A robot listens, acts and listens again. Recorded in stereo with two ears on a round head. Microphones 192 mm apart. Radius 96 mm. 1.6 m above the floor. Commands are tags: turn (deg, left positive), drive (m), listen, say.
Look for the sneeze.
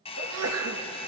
<turn deg="-90"/>
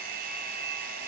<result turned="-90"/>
<say>Facing where the sneeze came from. I can't hear it now.</say>